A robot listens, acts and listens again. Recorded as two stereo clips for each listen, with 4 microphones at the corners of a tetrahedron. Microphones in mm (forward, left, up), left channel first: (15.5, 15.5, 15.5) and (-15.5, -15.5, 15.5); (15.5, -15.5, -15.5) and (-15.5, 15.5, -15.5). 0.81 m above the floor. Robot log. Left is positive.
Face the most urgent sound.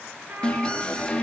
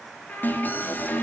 note: The alarm: 20° right.
cmd yaw -20
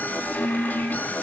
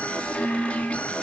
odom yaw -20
note: The alarm is now 10° left.
cmd yaw +10
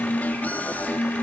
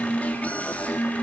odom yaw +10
end: Facing the alarm, 2 to 4 m away.